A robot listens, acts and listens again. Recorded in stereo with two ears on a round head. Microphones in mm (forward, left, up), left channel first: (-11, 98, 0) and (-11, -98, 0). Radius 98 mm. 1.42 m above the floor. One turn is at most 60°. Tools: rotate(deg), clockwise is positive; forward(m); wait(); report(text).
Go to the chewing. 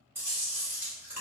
rotate(30)
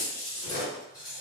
rotate(-20)
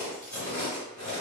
rotate(-10)
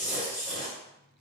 forward(1.0)
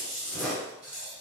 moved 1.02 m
forward(1.0)
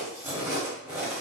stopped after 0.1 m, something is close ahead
rotate(10)
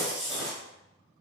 report("Arrived at the chewing, straight ahead.")